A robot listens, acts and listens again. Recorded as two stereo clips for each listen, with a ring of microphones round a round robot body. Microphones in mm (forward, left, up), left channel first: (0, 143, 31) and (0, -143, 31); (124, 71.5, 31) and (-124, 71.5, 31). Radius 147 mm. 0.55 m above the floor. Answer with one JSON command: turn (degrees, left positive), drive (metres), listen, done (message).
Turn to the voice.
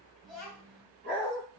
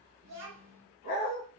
{"turn": 180}
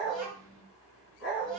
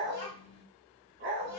{"done": "Facing the child speaking."}